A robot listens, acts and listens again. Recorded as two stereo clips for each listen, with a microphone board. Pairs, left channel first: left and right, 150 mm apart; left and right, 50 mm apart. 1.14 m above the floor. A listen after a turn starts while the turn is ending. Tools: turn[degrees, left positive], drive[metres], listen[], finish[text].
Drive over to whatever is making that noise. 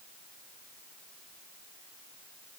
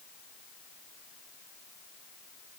Action: listen[]
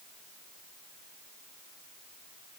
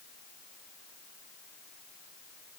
Action: listen[]
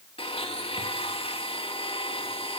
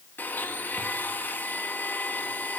Thought: The blender: about 40° left or 140° left.
Action: turn[40]
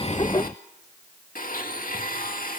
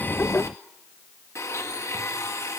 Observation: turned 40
Thought: So it is at 100° left.
Action: turn[100]
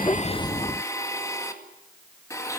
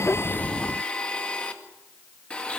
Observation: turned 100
Thought: The blender is now 20° left.
Action: turn[20]
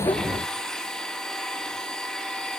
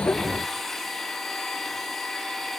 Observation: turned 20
Action: drive[1.0]
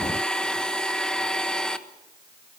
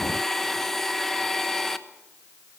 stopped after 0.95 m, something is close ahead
Action: finish[Arrived at the blender, straight ahead.]